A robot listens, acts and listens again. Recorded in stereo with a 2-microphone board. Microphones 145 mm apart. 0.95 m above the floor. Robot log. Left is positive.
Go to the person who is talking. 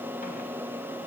cmd idle
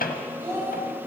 note: The child speaking: about 15° right or 165° right.
cmd yaw -15
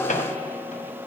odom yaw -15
cmd idle
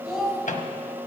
cmd fwd 1.0
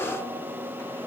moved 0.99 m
cmd idle
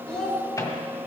cmd fwd 1.0
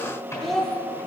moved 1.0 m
cmd fwd 1.0
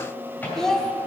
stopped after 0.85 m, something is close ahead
end: I am next to the child speaking.